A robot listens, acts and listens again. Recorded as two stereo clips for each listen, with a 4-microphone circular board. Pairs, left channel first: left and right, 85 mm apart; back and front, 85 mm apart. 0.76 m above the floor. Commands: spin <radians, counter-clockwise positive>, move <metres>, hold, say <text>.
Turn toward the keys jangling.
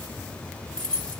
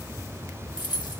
spin 2.97
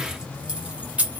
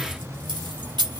spin -0.26
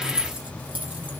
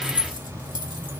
spin -0.35
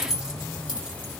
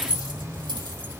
spin -0.26
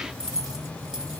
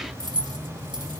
spin -0.17
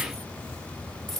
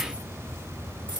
hold
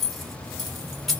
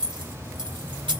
say Found it: keys jangling, straight ahead.